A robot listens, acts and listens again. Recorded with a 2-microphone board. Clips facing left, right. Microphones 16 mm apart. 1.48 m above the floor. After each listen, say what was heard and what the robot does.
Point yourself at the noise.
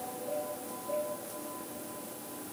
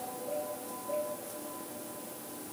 Keep listening.
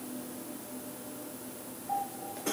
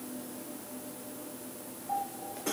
Keep listening.
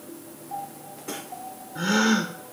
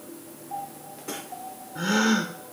Turn 30° left.
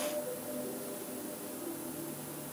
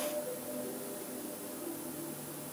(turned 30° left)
Keep listening.
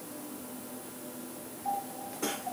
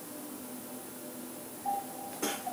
I heard a gasp, but can't make it out now. It was about 20° right or 140° left.